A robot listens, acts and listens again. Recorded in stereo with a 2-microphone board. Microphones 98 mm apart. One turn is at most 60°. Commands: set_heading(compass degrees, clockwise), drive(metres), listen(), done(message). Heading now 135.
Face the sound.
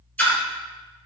set_heading(115)
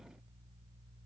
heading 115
listen()
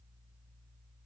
done("I heard a splash, but can't make it out now. It was about straight ahead or 140° left.")